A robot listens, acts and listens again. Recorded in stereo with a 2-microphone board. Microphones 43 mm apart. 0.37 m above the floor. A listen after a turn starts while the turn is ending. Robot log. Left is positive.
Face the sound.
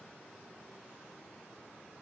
cmd idle
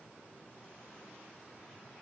cmd idle
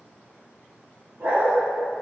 cmd yaw -90
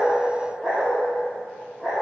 note: So it is at 10° right.
cmd yaw -10
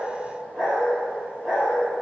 end: Facing the dog barking.